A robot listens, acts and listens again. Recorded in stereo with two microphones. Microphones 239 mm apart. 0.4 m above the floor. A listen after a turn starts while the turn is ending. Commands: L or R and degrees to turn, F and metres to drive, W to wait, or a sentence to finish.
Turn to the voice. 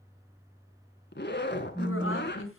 L65
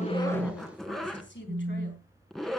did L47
L55
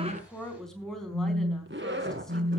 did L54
Found it: a woman speaking, straight ahead, over 4 m away.